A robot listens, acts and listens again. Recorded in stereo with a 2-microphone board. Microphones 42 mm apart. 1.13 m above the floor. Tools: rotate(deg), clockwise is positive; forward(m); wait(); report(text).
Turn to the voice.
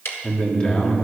rotate(-25)
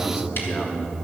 rotate(-130)
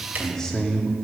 rotate(-15)
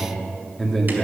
report("Found it: a man speaking, straight ahead, 2 to 4 m away.")